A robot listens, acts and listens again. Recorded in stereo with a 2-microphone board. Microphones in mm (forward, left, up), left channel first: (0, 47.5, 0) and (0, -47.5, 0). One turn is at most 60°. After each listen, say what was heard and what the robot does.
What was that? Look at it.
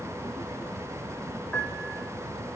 Turn 30° left.
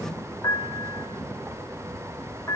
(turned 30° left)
So it is at 140° left. Turn 60° left.
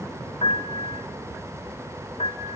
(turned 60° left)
The piano is now 100° left. Turn 60° left.
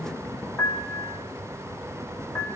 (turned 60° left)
The piano is now 25° left. Turn 25° left.
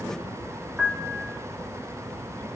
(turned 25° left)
The piano is now 10° right. Turn 10° right.
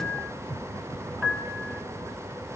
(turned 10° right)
Found it: a piano, straight ahead.